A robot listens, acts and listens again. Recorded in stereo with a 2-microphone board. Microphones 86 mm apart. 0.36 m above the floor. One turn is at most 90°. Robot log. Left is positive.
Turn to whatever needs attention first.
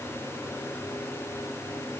cmd idle
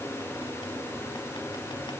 cmd idle
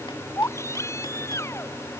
note: The baby crying: about 35° left or 145° left.
cmd yaw +35
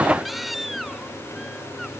end: Facing the baby crying.